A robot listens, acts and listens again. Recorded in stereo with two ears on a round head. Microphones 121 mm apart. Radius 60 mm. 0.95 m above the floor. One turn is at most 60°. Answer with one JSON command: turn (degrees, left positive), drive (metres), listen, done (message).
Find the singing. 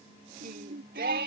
{"turn": -60}
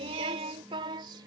{"turn": -35}
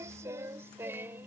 {"turn": -15}
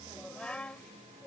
{"turn": 10}
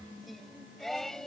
{"done": "Facing the singing."}